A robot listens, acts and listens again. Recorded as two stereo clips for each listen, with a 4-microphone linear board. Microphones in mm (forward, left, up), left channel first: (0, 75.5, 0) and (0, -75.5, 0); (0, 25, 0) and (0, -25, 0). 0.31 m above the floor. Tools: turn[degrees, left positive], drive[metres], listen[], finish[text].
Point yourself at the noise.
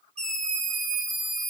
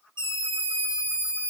Thought: The scream: about 70° left or 110° left.
Action: turn[70]
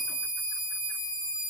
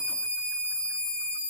Thought: So it is at 15° left.
Action: turn[15]
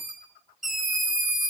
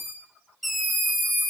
Action: finish[Facing the scream, 2 to 4 m away.]